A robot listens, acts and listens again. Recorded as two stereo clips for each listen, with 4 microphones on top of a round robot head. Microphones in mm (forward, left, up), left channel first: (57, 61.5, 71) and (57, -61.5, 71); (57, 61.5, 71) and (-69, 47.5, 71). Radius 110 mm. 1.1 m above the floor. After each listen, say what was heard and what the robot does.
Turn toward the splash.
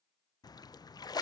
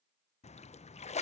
The splash: 35° left. Turn 35° left.
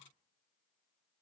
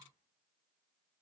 I heard a splash from this way, but can't make it out now.